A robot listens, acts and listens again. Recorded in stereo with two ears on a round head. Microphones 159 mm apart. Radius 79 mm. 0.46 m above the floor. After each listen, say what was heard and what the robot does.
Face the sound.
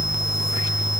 Keep listening.
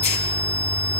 Keep listening.
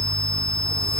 I can't make out anything.